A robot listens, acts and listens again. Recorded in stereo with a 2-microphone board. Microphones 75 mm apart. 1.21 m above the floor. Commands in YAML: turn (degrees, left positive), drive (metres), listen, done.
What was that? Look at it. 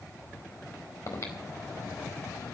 turn: 45
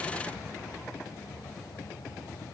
turn: 95
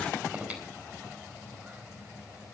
turn: -20
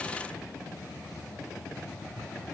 done: "Facing the breathing."